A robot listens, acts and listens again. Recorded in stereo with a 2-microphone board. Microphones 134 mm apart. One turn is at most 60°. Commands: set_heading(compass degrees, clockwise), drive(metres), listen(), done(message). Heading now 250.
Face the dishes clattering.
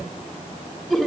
listen()
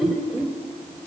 listen()
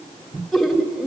done("I can't make out dishes clattering to turn to.")